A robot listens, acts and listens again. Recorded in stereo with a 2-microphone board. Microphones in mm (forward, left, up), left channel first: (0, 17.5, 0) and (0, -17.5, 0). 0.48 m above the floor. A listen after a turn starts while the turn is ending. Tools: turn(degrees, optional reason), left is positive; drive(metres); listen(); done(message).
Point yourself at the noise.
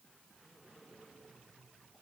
listen()
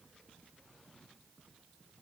listen()
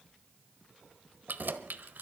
turn(degrees=-65, reason="The keys jangling: about 65° right or 115° right.")
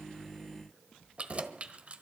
turn(degrees=-40, reason="So it is at 40° right.")
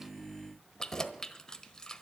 turn(degrees=20, reason="The keys jangling is now 20° left.")
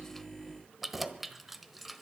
done("Found it: keys jangling, straight ahead, 1 to 2 m away.")